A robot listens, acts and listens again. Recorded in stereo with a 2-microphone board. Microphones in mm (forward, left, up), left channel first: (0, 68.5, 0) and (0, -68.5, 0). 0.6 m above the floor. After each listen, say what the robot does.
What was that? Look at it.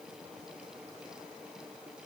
Keep listening.
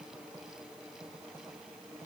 Keep listening.
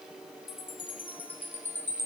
Turn 30° left.
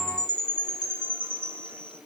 Turn 15° right.
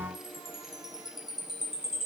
Found it: a chime, straight ahead, 1 to 2 m away.